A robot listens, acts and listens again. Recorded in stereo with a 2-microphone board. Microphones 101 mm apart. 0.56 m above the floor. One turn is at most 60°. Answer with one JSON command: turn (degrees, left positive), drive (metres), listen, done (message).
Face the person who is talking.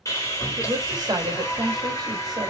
{"turn": -40}
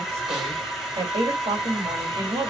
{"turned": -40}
{"turn": -60}
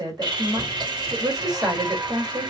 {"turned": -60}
{"turn": -45}
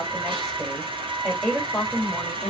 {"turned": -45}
{"done": "Facing the woman speaking, 2 to 4 m away."}